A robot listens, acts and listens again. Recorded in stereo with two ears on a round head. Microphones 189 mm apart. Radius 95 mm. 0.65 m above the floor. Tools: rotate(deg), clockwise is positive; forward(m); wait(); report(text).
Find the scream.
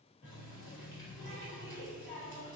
wait()
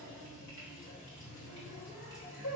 wait()
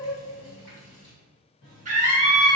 rotate(35)
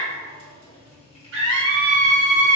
rotate(100)
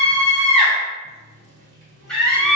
report("Facing the scream, 1 to 2 m away.")